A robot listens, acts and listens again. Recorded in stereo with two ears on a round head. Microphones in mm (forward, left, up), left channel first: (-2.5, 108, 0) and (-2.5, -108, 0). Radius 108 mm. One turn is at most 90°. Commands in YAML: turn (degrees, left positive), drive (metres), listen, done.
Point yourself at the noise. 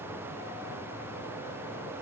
listen: true
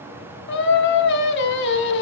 turn: 45
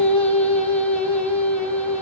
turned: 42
done: "Found it: singing, straight ahead, 1 to 2 m away."